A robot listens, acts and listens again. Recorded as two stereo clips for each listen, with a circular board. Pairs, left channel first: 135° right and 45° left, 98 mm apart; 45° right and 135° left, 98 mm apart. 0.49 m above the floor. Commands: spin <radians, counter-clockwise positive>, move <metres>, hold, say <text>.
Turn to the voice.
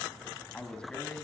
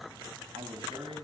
spin 2.53
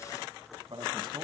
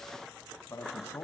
spin 0.26
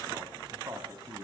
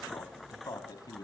say Facing the man speaking.